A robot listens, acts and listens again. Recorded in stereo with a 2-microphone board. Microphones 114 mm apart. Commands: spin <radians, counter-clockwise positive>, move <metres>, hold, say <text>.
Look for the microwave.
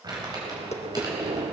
spin -1.22
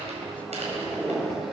say Facing the microwave, 2 to 4 m away.